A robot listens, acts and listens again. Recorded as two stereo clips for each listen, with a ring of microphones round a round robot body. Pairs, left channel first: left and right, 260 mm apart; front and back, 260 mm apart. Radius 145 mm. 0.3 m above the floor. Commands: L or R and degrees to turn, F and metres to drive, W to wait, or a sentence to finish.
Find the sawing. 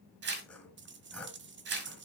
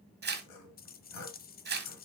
Found it: sawing, straight ahead, 2 to 4 m away.